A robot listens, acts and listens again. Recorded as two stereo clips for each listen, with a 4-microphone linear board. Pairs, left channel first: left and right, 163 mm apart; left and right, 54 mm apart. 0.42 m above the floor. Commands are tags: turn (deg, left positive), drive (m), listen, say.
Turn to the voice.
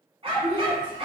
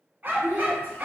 <turn deg="30"/>
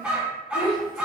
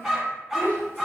<turn deg="135"/>
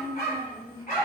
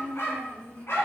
<turn deg="15"/>
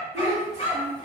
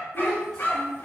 <say>Facing the child speaking.</say>